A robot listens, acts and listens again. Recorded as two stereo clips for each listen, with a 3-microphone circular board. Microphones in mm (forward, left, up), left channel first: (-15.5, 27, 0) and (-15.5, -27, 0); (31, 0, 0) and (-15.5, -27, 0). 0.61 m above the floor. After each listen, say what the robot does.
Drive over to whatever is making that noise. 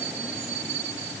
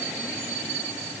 Keep listening.
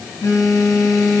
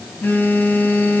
Turn 85° left.
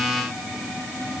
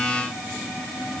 Keep listening.
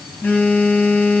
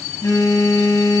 Turn 25° left.
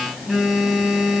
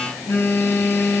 Drive 1.0 m forward.
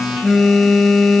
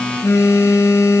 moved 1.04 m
Drive 1.0 m forward.
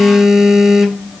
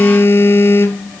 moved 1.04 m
Turn 10° right.
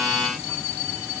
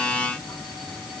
Keep listening.
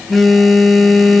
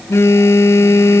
Drive 1.0 m forward.
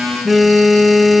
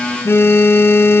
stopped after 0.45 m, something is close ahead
Arrived at the phone buzzing, straight ahead.